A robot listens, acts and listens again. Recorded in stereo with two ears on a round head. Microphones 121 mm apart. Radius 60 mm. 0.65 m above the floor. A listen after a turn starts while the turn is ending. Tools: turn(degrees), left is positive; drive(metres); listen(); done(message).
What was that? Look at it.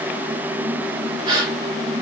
turn(degrees=-40)
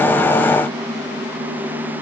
listen()
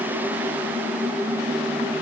done("I heard a gasp, but can't make it out now. It was about straight ahead or 100° right.")